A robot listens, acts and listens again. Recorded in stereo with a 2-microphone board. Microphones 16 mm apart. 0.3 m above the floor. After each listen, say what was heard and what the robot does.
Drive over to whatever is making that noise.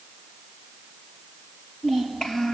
The child speaking: about 60° left or 120° left. Turn 60° left.
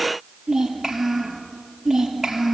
Drive 1.0 m forward.
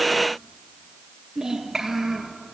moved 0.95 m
Drive 1.0 m forward.
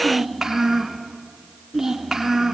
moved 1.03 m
The child speaking is now 15° right. Turn 15° right.
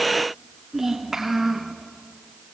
Drive 1.0 m forward.
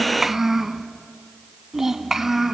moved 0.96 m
The child speaking is now 15° right. Turn 15° right.
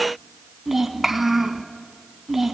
Drive 1.0 m forward.
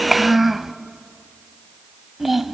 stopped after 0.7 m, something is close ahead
Arrived at the child speaking, straight ahead.